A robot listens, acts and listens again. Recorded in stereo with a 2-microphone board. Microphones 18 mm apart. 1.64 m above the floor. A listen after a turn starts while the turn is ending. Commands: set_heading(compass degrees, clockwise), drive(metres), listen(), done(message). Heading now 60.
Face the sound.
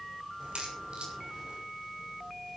set_heading(130)
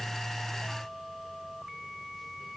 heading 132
listen()
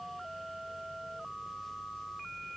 done("I heard a crack, but can't make it out now. It was about straight ahead or 35° right.")